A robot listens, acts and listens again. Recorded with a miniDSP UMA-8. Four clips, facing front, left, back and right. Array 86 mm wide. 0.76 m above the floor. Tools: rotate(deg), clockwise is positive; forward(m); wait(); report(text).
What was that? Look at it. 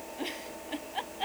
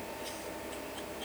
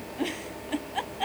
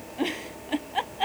rotate(100)
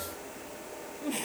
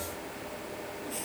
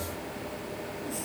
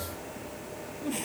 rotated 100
wait()
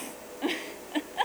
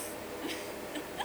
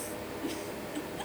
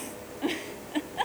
rotate(35)
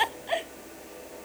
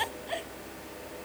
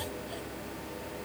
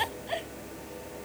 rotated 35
report("Facing the giggle.")